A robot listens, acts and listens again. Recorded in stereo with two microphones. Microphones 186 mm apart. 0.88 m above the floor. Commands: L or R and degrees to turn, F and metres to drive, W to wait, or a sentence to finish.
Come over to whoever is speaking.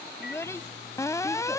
L30
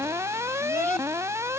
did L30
W
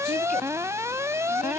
W
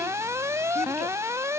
I heard a child speaking, but can't make it out now. It was about 15° right or 135° left. I did not reach it.